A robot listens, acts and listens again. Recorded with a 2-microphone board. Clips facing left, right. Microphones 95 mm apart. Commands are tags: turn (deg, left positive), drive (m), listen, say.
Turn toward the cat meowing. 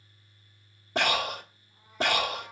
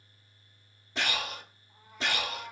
<turn deg="-55"/>
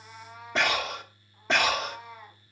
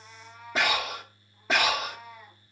<turn deg="30"/>
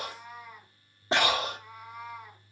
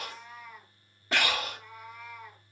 <turn deg="20"/>
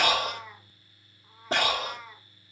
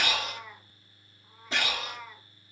<say>Found it: a cat meowing, straight ahead, 2 to 4 m away.</say>